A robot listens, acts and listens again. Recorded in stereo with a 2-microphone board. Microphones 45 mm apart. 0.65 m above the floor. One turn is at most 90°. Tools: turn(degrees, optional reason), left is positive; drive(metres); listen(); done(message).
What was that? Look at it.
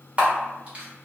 turn(degrees=-30, reason="The camera shutter: about 30° right or 150° right.")
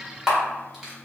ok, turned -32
done("Facing the camera shutter, 1 to 2 m away.")